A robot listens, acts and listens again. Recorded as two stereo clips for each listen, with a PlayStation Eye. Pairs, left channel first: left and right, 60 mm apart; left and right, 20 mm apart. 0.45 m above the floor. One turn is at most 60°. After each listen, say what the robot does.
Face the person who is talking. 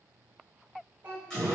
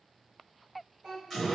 Turn 35° right.
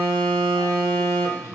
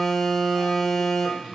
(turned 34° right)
Keep listening.
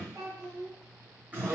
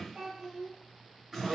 Turn 60° right.
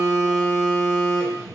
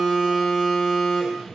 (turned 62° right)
Turn 45° right.
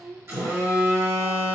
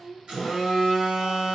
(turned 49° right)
Facing the child speaking, 1 to 2 m away.